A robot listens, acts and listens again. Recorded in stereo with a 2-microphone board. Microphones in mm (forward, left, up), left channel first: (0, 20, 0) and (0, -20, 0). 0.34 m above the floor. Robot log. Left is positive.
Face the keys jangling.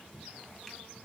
cmd idle
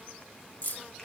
note: The keys jangling: about 55° left or 125° left.
cmd yaw +55
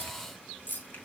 note: So it is at 55° left.
cmd yaw +55
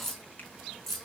end: Facing the keys jangling, 2 to 4 m away.